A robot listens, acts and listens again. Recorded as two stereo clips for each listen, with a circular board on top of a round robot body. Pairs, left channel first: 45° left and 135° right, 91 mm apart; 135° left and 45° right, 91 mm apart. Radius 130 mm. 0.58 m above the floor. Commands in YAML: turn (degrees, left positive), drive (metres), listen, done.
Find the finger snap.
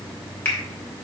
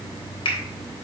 turn: 115
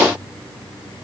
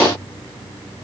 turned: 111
done: "Facing the finger snap, 2 to 4 m away."